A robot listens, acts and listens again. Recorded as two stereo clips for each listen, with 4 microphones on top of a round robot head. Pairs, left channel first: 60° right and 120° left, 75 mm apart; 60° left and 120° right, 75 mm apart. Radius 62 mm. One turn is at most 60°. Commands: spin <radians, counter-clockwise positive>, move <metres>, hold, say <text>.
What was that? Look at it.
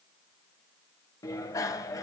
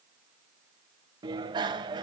spin -1.05
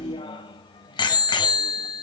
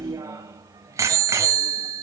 spin -1.05
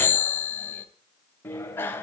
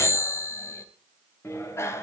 say Found it: a bicycle bell, straight ahead.